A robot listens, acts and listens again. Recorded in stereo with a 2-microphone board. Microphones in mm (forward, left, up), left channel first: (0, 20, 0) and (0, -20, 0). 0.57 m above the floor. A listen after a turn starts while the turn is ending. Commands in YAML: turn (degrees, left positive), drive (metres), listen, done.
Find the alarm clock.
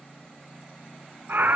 listen: true
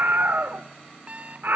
turn: -35
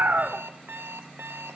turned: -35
turn: -105
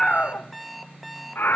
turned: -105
done: "Found it: an alarm clock, straight ahead, under 1 m away."